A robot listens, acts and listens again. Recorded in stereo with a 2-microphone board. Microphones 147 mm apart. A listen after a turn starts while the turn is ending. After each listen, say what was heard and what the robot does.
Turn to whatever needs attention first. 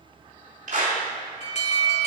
The alarm: about 50° left or 130° left. Turn 50° left.
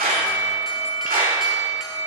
Facing the alarm.